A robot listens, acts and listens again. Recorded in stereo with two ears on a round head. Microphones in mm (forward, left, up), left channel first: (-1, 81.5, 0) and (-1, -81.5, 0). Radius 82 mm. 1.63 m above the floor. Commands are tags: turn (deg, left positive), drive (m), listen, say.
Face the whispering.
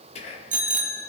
<turn deg="35"/>
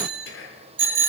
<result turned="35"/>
<turn deg="110"/>
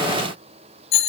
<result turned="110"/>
<listen/>
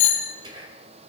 <turn deg="-25"/>
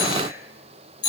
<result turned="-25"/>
<listen/>
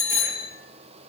<listen/>
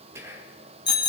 <turn deg="-15"/>
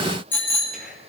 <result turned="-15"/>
<listen/>
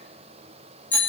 <listen/>
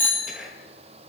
<say>Facing the whispering, 2 to 4 m away.</say>